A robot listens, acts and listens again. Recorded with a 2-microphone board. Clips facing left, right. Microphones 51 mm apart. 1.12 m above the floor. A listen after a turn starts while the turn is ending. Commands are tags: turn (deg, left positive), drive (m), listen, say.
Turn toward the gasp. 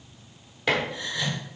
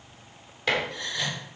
<turn deg="30"/>
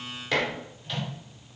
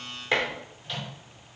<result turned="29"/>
<listen/>
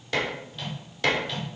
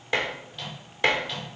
<say>I heard a gasp, but can't make it out now. It was about 25° right or 145° left.</say>